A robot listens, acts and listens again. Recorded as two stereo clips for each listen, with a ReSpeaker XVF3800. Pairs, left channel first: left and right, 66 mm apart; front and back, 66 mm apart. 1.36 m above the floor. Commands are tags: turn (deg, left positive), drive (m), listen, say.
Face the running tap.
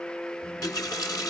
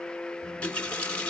<turn deg="70"/>
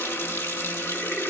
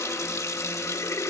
<turn deg="35"/>
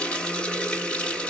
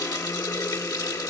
<turn deg="15"/>
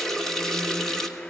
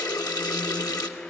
<say>Facing the running tap.</say>